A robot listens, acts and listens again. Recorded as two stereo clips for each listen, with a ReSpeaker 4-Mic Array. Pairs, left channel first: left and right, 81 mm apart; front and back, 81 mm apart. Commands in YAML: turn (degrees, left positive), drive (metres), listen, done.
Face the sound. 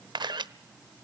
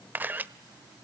turn: -115
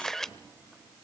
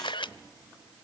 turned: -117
done: "Found it: a camera shutter, straight ahead, under 1 m away."